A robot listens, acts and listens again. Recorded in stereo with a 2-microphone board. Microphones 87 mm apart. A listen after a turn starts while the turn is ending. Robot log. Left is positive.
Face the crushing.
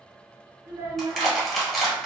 cmd yaw +30
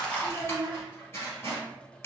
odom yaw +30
note: So it is at 150° left.
cmd yaw +150
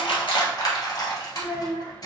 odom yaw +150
note: The crushing is now 45° left.
cmd yaw +45
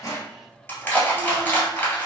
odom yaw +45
note: The crushing is now 20° left.
cmd yaw +20
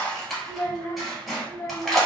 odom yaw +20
end: Facing the crushing.